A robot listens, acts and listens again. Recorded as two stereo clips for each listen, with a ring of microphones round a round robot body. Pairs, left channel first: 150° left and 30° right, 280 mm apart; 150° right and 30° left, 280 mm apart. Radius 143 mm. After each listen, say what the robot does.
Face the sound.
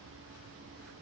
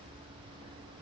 Keep listening.
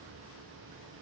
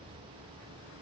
Keep listening.
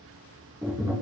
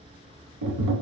Turn 50° left.
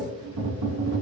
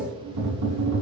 Facing the tapping.